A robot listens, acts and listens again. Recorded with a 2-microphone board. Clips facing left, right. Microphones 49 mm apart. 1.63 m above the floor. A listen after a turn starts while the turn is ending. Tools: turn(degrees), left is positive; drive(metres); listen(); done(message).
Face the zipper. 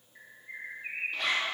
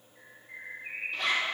turn(degrees=30)
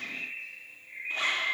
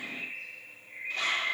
turn(degrees=150)
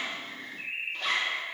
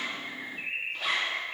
done("Facing the zipper.")